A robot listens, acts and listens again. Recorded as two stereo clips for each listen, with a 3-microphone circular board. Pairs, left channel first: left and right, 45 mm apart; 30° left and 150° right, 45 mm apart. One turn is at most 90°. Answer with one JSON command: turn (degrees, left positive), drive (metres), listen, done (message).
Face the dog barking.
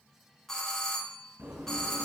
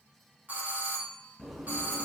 {"listen": true}
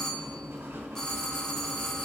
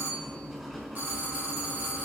{"listen": true}
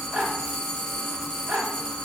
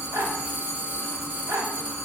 {"turn": -90}
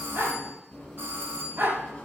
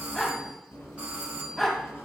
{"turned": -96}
{"turn": -50}
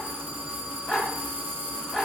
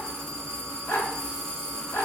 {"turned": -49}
{"done": "Found it: a dog barking, straight ahead."}